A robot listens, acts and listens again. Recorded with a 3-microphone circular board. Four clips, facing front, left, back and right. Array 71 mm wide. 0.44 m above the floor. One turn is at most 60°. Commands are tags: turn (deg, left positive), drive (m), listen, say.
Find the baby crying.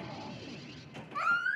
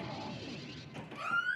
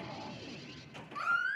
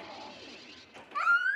<turn deg="-60"/>
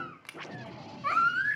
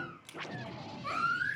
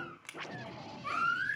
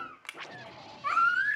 <turn deg="-20"/>
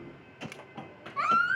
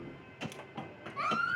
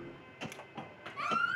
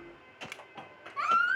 <say>Facing the baby crying, 2 to 4 m away.</say>